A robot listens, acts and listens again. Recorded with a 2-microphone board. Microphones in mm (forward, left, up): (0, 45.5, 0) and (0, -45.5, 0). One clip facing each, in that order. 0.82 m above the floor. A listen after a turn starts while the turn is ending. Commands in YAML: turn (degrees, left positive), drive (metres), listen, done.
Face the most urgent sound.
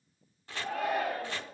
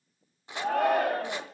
turn: -65
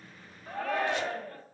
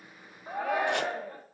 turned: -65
turn: -20
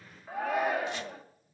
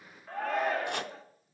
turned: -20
done: "Facing the shout."